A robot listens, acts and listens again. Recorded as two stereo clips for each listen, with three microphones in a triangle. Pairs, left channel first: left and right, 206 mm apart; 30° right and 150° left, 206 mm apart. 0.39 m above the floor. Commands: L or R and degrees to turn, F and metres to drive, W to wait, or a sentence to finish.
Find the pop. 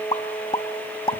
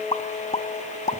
L25
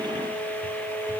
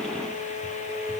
I heard a pop from this way, but can't make it out now.